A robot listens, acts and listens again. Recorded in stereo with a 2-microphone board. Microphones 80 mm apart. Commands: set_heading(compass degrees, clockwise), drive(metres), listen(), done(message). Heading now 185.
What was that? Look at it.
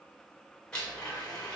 set_heading(155)
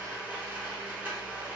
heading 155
set_heading(175)
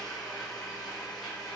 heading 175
done("Found it: a blender, straight ahead, under 1 m away.")